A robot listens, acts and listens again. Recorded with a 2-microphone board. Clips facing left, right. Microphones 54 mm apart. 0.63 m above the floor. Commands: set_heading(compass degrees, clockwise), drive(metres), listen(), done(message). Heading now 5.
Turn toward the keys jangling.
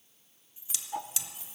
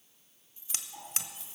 set_heading(335)
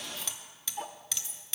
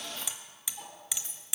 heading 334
set_heading(14)
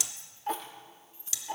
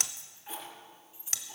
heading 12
set_heading(27)
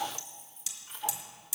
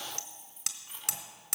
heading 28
done("Facing the keys jangling.")